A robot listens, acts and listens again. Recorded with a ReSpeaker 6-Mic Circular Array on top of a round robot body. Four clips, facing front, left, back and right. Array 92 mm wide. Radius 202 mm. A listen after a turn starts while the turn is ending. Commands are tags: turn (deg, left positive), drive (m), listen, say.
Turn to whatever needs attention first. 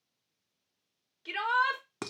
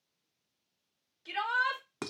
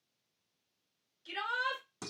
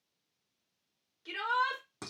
<say>Found it: a shout, straight ahead.</say>